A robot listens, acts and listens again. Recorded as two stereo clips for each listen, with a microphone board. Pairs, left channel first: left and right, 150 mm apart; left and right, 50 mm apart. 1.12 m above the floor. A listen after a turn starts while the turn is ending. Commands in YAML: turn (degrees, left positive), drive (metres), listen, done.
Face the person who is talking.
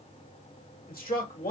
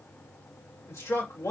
turn: 90
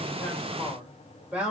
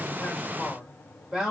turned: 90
turn: -10
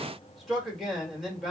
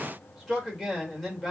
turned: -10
done: "Facing the man speaking, 1 to 2 m away."